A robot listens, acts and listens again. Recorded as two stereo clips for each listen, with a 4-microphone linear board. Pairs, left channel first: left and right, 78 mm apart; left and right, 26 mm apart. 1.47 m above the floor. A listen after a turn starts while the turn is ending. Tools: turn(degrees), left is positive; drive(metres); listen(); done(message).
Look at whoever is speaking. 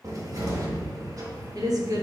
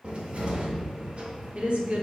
turn(degrees=-50)
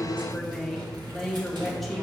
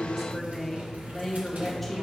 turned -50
done("Found it: a woman speaking, straight ahead, 1 to 2 m away.")